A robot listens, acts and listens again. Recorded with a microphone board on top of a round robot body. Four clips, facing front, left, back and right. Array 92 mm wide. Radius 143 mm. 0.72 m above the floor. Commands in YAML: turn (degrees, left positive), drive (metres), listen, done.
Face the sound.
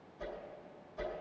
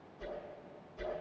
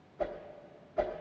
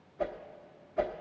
turn: -130
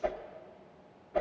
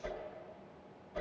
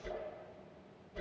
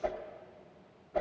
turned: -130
turn: -35
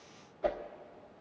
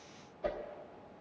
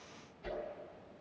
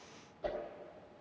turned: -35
done: "Found it: a whoosh, straight ahead, 1 to 2 m away."